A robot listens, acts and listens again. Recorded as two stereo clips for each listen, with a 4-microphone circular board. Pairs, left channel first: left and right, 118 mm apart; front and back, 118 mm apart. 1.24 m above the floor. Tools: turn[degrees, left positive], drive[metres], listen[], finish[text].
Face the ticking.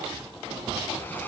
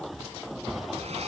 Action: listen[]
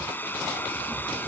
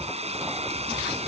Action: listen[]
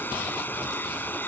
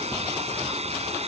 Action: finish[I can't make out ticking, only a hair dryer.]